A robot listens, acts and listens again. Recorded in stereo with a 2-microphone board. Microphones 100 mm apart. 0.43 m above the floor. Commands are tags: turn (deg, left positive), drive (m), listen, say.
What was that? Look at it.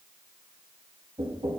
<turn deg="-70"/>
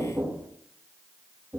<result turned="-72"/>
<turn deg="-25"/>
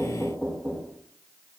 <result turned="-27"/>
<say>Found it: knocking, straight ahead.</say>